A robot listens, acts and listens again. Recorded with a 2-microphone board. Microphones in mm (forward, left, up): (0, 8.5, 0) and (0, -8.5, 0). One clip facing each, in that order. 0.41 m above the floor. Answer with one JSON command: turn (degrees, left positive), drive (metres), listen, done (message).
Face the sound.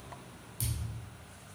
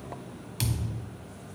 {"turn": -75}
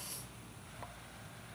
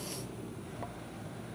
{"listen": true}
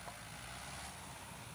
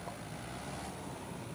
{"done": "I heard a thud, but can't make it out now. It was about straight ahead or 30° right."}